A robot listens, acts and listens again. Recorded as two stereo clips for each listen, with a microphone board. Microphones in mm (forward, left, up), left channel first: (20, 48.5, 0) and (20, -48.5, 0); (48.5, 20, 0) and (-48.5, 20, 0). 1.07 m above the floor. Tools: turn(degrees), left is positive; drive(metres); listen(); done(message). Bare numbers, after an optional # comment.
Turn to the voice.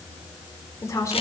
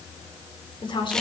# The woman speaking: 35° left.
turn(35)
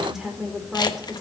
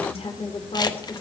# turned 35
done("Facing the woman speaking.")